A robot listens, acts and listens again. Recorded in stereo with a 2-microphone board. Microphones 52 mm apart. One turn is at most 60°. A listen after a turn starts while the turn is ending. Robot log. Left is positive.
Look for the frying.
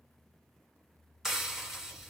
cmd yaw +30
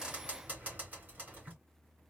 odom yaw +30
note: So it is at 30° right.
cmd yaw -30
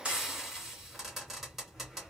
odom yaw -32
end: Found it: frying, straight ahead, 2 to 4 m away.